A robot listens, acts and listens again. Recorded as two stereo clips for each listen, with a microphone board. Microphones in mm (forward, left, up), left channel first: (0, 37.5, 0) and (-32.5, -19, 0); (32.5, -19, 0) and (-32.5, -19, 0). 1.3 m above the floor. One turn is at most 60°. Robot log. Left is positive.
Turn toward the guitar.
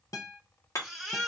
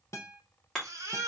note: The guitar: 35° left.
cmd yaw +35
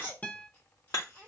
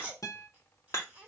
end: Found it: a guitar, straight ahead.